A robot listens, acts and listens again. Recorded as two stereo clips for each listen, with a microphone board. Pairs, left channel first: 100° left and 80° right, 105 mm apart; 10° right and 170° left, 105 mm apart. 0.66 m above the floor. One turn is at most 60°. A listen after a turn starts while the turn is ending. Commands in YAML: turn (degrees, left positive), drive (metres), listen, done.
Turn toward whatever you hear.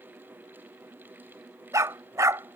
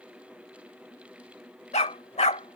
turn: -15
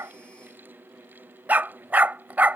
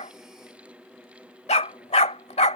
done: "Facing the dog barking."